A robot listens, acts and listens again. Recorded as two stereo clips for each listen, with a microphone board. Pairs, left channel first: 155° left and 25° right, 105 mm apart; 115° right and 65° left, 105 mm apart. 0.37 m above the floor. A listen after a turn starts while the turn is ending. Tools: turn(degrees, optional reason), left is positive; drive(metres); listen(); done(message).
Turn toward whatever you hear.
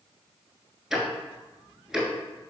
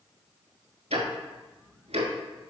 turn(degrees=60, reason="The ticking: 60° left.")
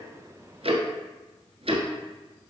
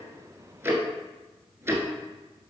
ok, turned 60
done("Found it: ticking, straight ahead.")